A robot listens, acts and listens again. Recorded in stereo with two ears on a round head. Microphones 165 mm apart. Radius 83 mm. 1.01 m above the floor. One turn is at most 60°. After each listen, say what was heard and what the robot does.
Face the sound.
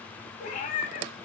The cat meowing: about 50° left or 130° left. Turn 50° left.
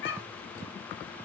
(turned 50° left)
So it is at 75° left. Turn 60° left.
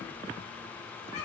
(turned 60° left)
Nothing new. It was at 15° left. Turn 15° left.
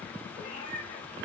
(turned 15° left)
The cat meowing is now 25° left. Turn 25° left.
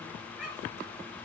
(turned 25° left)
Found it: a cat meowing, straight ahead.